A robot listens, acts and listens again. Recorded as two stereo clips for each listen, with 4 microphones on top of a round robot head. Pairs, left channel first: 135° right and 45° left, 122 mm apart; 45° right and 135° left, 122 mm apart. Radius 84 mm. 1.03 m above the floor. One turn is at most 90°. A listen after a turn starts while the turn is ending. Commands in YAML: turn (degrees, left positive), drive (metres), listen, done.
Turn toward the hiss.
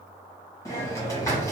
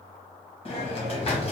turn: -70
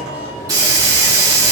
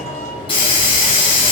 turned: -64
turn: -10
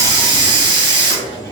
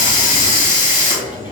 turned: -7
done: "Facing the hiss, 1 to 2 m away."